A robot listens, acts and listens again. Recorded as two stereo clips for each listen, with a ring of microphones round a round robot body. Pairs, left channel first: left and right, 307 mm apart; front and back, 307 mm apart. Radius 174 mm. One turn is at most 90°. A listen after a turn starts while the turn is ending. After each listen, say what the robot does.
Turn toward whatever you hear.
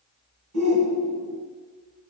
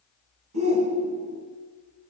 Turn 90° right.
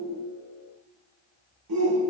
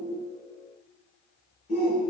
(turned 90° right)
Turn 70° right.
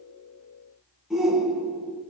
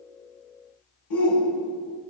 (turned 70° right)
Facing the shout.